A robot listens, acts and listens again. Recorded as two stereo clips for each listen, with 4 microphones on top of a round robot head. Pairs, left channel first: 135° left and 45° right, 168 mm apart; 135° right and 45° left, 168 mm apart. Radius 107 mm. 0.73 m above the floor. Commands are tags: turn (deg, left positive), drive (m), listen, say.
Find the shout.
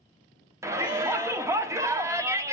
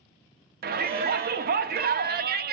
<turn deg="25"/>
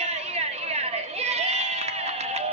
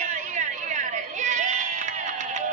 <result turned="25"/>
<say>Found it: a shout, straight ahead, 1 to 2 m away.</say>